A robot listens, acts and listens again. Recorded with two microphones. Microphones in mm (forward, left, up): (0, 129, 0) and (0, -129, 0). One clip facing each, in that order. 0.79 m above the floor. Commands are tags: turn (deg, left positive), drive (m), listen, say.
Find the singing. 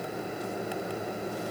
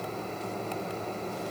<listen/>
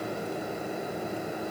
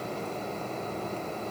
<listen/>
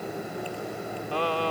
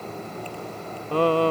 <turn deg="-55"/>
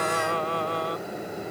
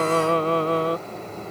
<turn deg="-70"/>
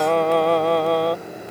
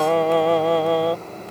<say>Found it: singing, straight ahead.</say>